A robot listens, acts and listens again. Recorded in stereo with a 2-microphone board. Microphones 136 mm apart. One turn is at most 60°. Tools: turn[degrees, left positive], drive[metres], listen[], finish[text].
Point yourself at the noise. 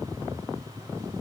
Action: listen[]
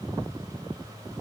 Action: listen[]
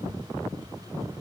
Action: finish[I can't make out anything.]